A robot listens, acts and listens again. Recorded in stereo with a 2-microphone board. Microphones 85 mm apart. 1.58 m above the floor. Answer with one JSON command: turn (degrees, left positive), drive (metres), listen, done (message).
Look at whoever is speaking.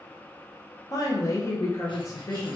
{"turn": 35}
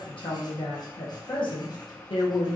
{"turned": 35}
{"turn": 105}
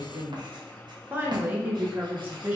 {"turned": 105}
{"turn": -20}
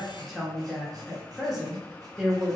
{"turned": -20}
{"done": "Facing the woman speaking, 1 to 2 m away."}